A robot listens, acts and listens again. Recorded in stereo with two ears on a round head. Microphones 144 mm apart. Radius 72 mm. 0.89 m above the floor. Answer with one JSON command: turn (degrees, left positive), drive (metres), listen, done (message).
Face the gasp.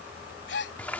{"turn": 70}
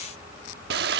{"listen": true}
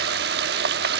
{"done": "I heard a gasp, but can't make it out now. It was about straight ahead or 40° left."}